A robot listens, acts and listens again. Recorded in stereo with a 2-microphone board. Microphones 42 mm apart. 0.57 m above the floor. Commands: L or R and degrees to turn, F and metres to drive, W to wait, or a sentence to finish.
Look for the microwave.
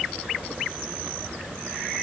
W
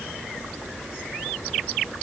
W
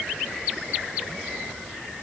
I can't make out a microwave to turn to.